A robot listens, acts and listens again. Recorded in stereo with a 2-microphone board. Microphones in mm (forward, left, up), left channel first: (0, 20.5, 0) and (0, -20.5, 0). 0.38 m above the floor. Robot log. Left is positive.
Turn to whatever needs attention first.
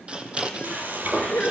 note: The crying: about 35° left or 145° left.
cmd yaw +35
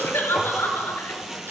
note: So it is at 110° left.
cmd yaw +110
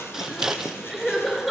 end: Found it: crying, straight ahead.